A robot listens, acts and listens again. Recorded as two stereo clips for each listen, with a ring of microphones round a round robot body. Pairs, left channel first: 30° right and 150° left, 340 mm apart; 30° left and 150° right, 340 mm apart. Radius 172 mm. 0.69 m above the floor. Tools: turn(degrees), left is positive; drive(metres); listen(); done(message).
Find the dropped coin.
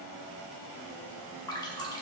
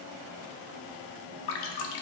listen()
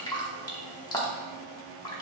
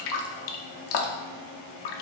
listen()
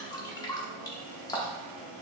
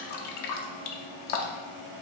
done("I can't make out a dropped coin to turn to.")